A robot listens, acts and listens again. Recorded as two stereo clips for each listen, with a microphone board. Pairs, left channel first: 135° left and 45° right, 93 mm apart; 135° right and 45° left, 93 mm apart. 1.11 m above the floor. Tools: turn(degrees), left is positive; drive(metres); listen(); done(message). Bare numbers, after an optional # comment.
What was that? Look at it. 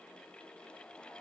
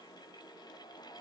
listen()
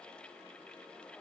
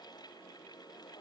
listen()
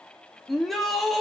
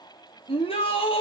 # The shout: 135° right.
turn(-135)
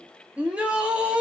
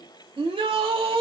# The shout is now 30° left.
turn(30)
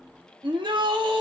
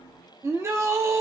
# The shout is now 15° right.
turn(-15)
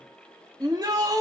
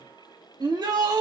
done("Facing the shout.")